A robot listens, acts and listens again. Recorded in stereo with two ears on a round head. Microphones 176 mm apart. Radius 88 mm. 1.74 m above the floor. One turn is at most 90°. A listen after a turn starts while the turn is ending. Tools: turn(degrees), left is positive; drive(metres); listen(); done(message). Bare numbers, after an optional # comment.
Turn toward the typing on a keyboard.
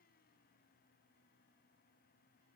listen()
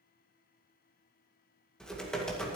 turn(30)
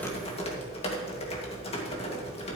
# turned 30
# So it is at 150° left.
turn(90)
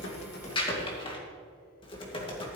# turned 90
# The typing on a keyboard is now 25° left.
turn(25)
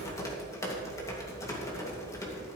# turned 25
# The typing on a keyboard is now 15° left.
turn(15)
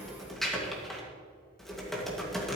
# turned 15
done("Facing the typing on a keyboard, 2 to 4 m away.")